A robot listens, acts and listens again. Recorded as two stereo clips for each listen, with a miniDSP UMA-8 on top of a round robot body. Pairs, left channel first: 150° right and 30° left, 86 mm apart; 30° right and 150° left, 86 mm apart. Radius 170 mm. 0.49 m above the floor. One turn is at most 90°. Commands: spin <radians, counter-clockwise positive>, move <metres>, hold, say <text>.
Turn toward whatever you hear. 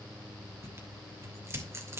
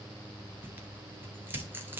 spin 1.48
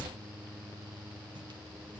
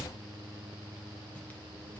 spin 0.70
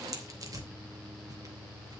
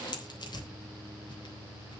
spin -0.17
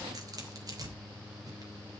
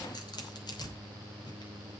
say Facing the tearing paper.